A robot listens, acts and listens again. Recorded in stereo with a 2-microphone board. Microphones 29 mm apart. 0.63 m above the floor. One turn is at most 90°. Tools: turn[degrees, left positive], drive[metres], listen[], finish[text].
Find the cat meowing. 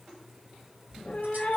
Thought: The cat meowing: about 55° left or 125° left.
Action: turn[55]
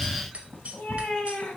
Thought: So it is at 85° left.
Action: turn[85]
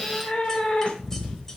Thought: The cat meowing is now 55° left.
Action: turn[55]
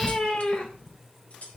Thought: The cat meowing is now 45° left.
Action: turn[45]
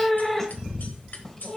Thought: The cat meowing is now 15° left.
Action: turn[15]
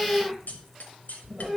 Action: finish[Found it: a cat meowing, straight ahead.]